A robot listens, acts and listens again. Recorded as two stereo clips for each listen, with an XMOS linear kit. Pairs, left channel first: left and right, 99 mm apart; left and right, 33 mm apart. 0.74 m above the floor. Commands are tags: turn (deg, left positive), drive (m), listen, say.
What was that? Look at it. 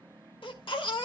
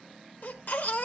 <turn deg="60"/>
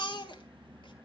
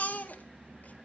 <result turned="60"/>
<turn deg="55"/>
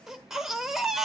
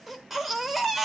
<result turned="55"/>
<say>Facing the baby crying, 1 to 2 m away.</say>